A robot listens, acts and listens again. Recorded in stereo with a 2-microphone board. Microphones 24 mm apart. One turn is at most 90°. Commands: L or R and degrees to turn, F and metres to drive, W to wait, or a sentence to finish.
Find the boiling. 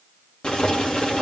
L50
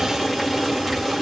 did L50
L10
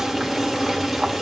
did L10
Facing the boiling, 2 to 4 m away.